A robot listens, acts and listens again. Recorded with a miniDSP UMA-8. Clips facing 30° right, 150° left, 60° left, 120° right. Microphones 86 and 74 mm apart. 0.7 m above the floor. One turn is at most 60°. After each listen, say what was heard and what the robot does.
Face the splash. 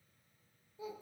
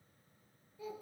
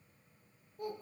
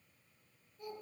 Keep listening.
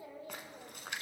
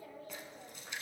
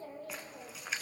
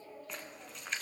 The splash: 25° right. Turn 25° right.
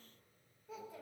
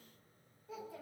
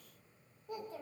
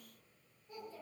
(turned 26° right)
I heard a splash from this way, but can't make it out now.